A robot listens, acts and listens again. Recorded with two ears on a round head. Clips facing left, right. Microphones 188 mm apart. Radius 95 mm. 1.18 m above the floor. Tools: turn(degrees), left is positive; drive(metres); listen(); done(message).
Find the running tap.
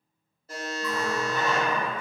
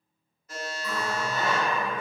turn(degrees=60)
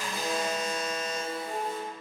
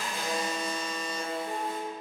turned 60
turn(degrees=60)
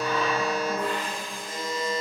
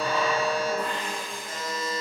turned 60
done("Found it: a running tap, straight ahead.")